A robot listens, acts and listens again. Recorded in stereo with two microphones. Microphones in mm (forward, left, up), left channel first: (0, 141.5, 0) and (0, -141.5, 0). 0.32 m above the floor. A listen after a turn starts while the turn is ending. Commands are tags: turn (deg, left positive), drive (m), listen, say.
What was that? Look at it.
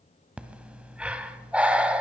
<turn deg="-30"/>
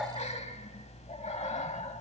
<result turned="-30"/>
<turn deg="25"/>
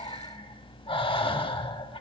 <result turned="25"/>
<turn deg="20"/>
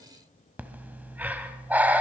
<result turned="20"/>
<say>Facing the breathing.</say>